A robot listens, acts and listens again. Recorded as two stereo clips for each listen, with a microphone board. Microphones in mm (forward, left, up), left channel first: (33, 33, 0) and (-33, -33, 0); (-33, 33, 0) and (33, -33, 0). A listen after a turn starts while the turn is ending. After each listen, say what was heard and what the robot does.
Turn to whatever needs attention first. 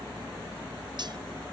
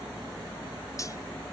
Keep listening.
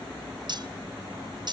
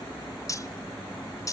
Keep listening.
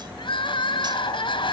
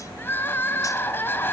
The crying: 70° left. Turn 70° left.
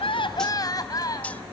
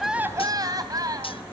Found it: crying, straight ahead.